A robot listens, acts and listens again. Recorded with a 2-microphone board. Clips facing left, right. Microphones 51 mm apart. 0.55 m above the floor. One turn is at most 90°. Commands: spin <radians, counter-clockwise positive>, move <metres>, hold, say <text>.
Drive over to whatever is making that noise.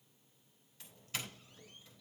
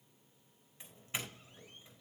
spin -0.44
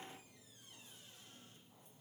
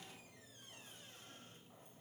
hold
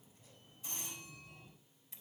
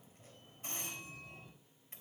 spin -1.57
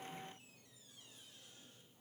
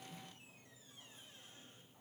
spin -0.61
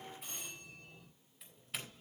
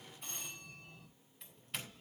move 1.0
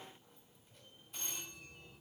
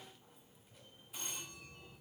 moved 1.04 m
move 1.0
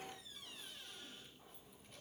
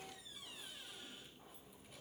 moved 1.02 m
hold
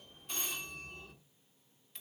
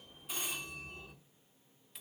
spin -0.17
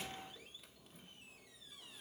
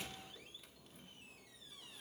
move 1.0
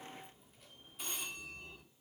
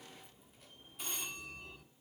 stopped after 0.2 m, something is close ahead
say Arrived at the doorbell, straight ahead.